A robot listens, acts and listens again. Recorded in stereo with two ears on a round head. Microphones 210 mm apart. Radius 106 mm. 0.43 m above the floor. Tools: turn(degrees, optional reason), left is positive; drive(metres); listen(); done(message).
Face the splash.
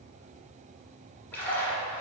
turn(degrees=30)
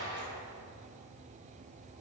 turn(degrees=-20, reason="So it is at 20° right.")
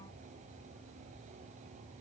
done("Facing where the splash came from. I can't hear it now.")